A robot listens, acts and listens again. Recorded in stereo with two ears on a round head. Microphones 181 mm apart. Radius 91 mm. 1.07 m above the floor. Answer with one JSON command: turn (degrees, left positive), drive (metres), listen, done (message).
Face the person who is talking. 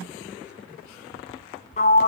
{"listen": true}
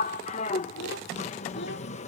{"turn": 55}
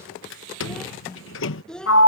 {"done": "Facing the child speaking."}